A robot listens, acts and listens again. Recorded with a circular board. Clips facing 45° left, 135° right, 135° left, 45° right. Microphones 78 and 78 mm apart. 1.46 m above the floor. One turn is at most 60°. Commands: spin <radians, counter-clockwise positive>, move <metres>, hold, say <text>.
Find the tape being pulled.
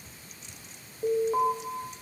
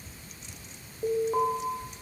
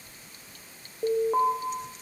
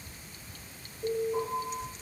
hold
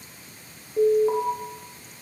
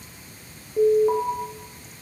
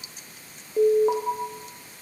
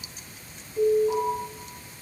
hold
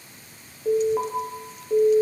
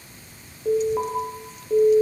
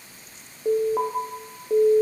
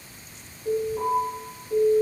say I can't make out tape being pulled, only an alarm.